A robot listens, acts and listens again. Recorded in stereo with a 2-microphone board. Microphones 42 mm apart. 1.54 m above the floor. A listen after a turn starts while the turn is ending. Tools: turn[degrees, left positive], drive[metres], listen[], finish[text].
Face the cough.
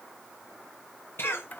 Thought: The cough: about 70° left or 110° left.
Action: turn[70]
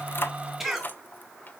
Action: finish[Facing the cough, 2 to 4 m away.]